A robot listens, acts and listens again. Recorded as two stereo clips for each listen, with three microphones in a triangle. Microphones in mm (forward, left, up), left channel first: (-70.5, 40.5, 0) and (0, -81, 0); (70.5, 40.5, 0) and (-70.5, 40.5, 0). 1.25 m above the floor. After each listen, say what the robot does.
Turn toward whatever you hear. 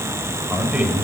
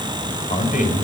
Turn 25° left.
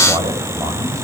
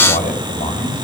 Facing the man speaking, over 4 m away.